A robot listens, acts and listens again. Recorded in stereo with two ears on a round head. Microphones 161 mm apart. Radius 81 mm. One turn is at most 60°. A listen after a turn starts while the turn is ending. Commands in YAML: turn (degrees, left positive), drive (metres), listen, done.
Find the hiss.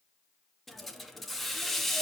turn: 30
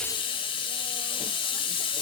turn: 60
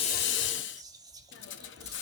turn: 60
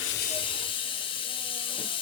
turn: 30
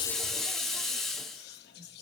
done: "Facing the hiss, under 1 m away."